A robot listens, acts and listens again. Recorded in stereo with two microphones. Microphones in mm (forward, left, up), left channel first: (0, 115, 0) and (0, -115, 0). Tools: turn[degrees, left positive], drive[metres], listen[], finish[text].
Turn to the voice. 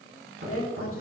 Thought: The woman speaking: about 65° left or 115° left.
Action: turn[65]
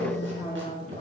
Thought: So it is at 30° left.
Action: turn[30]
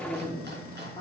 Thought: The woman speaking is now 20° left.
Action: turn[20]
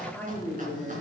Thought: The woman speaking is now 10° left.
Action: turn[10]
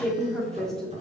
Action: finish[Facing the woman speaking.]